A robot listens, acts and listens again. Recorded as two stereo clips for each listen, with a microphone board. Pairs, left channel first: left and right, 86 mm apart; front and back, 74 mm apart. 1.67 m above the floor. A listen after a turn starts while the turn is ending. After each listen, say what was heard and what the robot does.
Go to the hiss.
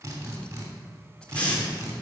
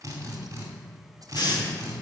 The hiss: 15° left. Turn 15° left.
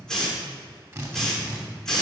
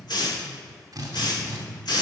Drive 1.0 m forward.
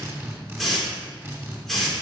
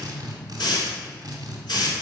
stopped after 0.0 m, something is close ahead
Blocked. The hiss is further on, straight ahead.